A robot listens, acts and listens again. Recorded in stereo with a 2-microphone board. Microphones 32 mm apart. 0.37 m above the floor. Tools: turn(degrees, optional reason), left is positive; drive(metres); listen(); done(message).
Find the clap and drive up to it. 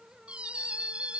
listen()
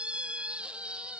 listen()
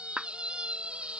turn(degrees=-30, reason="The clap: about 30° right or 150° right.")
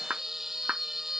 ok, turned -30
turn(degrees=-115, reason="So it is at 115° right.")
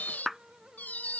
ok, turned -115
drive(metres=1.0)
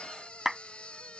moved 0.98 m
drive(metres=1.0)
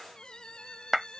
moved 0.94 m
turn(degrees=-10, reason="The clap is now 10° right.")
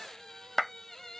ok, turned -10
drive(metres=1.0)
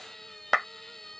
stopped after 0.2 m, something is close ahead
done("I am next to the clap.")